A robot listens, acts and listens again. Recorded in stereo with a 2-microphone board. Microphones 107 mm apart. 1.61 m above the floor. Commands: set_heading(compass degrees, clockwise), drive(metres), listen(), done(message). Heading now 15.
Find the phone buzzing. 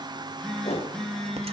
set_heading(345)
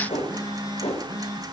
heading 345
set_heading(200)
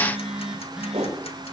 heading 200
done("Facing the phone buzzing.")